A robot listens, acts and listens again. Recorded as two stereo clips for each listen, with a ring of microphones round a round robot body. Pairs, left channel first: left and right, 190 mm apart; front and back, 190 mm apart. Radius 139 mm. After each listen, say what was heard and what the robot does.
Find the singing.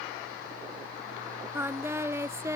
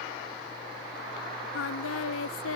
The singing: 15° right. Turn 15° right.
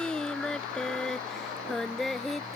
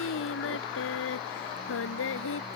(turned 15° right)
Found it: singing, straight ahead.